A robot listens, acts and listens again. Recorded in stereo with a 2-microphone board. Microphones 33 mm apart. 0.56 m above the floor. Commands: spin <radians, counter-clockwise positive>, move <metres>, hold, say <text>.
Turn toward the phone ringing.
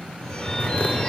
spin 0.52
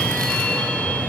spin 2.01
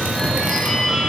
spin 0.26
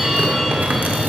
say Facing the phone ringing, 1 to 2 m away.